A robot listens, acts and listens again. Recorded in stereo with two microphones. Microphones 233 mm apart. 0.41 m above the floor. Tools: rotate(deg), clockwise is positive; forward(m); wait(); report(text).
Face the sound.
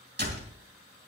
rotate(45)
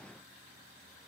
wait()
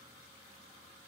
report("I heard a door slam, but can't make it out now. It was about straight ahead or 90° right.")